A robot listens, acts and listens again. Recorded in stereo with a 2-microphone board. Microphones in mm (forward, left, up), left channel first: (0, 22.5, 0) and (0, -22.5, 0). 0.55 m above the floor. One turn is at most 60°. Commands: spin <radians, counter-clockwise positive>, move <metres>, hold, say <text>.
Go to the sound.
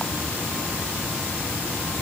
hold
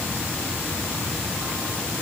hold
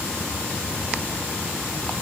say I can't make out anything to turn to.